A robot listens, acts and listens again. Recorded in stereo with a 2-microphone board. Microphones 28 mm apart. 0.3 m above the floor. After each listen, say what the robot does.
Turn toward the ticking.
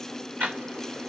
Turn 75° right.
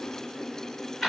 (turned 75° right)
Found it: ticking, straight ahead, 2 to 4 m away.